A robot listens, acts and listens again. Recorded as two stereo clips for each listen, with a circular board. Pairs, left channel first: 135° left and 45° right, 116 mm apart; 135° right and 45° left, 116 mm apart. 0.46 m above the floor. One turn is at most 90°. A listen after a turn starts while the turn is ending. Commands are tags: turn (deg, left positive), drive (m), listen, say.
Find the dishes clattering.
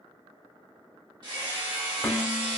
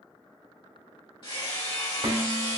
<turn deg="60"/>
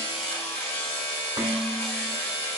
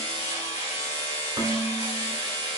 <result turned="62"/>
<say>Facing the dishes clattering, 1 to 2 m away.</say>